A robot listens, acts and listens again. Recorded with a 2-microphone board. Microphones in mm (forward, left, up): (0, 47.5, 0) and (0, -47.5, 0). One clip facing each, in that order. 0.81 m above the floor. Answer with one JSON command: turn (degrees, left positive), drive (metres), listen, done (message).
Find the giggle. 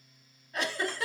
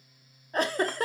{"turn": -40}
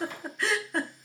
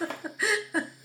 {"done": "Found it: a giggle, straight ahead."}